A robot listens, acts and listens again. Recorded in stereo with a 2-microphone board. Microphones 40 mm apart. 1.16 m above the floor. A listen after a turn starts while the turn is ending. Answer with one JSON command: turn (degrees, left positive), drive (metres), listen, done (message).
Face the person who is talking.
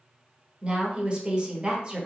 {"turn": -30}
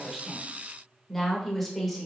{"done": "Facing the woman speaking, 1 to 2 m away."}